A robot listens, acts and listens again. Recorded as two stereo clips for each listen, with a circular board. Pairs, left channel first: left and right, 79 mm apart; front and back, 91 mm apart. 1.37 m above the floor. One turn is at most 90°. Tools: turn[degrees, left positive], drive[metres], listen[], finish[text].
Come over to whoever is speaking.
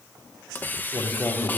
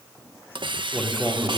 Thought: The man speaking: 95° left.
Action: turn[90]
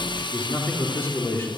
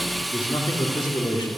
Thought: The man speaking is now 30° left.
Action: turn[30]
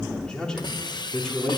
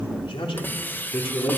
Thought: The man speaking is now 10° left.
Action: turn[10]
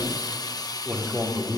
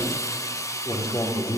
Action: drive[1.0]
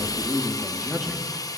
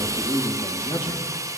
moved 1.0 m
Action: drive[1.0]
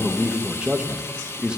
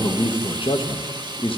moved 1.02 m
Thought: The man speaking is now 10° right.
Action: turn[-10]
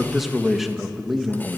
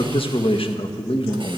Action: drive[1.0]
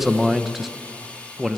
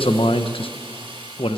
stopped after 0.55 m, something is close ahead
Action: finish[Arrived at the man speaking, straight ahead.]